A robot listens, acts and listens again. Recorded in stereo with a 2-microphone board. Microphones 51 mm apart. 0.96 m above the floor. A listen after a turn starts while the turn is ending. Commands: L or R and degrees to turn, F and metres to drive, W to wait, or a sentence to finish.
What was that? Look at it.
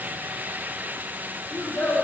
L35
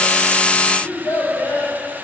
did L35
L115
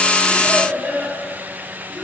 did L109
L15
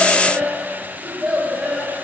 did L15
Found it: a child speaking, straight ahead, 2 to 4 m away.